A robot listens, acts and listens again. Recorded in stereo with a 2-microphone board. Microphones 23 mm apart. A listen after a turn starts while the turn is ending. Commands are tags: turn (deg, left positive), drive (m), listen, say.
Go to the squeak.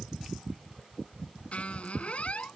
<turn deg="65"/>
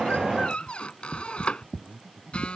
<turn deg="50"/>
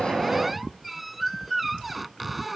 <drive m="1.0"/>
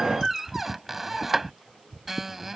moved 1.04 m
<turn deg="-10"/>
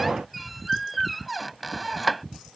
<drive m="1.0"/>
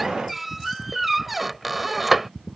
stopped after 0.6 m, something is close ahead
<say>Arrived at the squeak, straight ahead.</say>